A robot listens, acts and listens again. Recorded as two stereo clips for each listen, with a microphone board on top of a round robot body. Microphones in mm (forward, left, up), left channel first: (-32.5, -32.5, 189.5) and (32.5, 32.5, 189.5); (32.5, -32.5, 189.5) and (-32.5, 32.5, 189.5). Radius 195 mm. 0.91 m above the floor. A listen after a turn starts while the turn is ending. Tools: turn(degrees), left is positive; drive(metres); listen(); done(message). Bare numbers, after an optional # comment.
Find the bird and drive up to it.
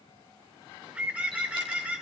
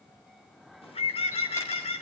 # The bird: 30° right.
turn(-30)
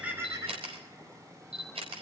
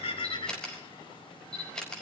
# The bird is now 10° right.
turn(-10)
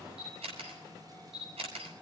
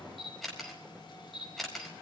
listen()
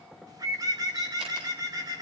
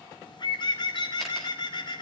drive(1.0)
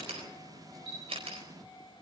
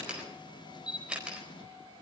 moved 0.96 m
listen()
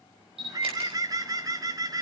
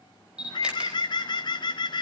drive(1.0)
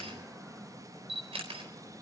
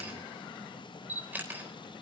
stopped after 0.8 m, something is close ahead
listen()
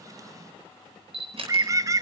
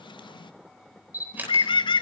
# The bird is now 10° right.
turn(-10)
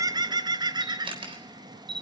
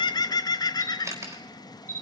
done("I am next to the bird.")